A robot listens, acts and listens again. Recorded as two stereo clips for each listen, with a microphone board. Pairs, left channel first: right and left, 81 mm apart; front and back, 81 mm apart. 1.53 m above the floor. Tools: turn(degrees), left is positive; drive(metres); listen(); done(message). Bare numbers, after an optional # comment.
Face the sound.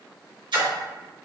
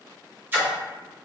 # The splash: 115° left.
turn(115)
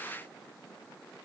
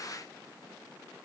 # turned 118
done("Facing where the splash came from. I can't hear it now.")